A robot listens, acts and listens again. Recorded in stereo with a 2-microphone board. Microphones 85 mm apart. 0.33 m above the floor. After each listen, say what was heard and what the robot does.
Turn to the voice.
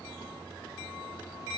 Keep listening.
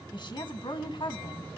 The woman speaking: about 65° left or 115° left. Turn 65° left.
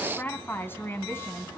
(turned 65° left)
So it is at 30° left. Turn 30° left.
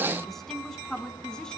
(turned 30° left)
Found it: a woman speaking, straight ahead.